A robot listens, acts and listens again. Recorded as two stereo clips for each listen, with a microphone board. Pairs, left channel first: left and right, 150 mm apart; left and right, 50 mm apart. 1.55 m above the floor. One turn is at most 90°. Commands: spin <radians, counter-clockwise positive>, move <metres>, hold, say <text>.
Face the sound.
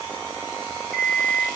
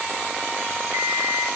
spin -1.57
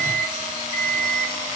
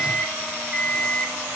spin -0.17
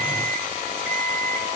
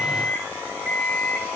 say Facing the alarm clock.